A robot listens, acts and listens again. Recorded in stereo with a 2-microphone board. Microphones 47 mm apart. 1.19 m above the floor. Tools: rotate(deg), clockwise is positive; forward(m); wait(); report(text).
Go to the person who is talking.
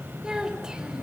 rotate(15)
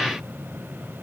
wait()
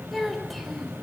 forward(1.0)
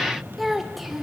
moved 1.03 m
forward(1.0)
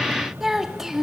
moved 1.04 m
rotate(10)
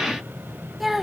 forward(1.0)
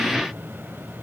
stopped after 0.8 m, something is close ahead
wait()
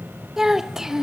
rotate(15)
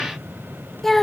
report("Arrived at the child speaking, straight ahead.")